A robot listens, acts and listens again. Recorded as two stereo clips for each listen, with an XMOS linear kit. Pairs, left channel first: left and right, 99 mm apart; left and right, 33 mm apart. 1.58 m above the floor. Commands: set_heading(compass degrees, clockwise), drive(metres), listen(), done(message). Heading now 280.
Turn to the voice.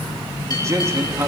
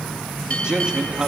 set_heading(310)
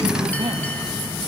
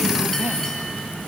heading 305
listen()
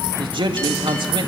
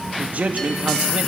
set_heading(70)
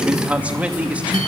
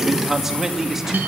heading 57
set_heading(72)
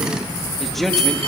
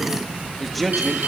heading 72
done("Found it: a man speaking, straight ahead.")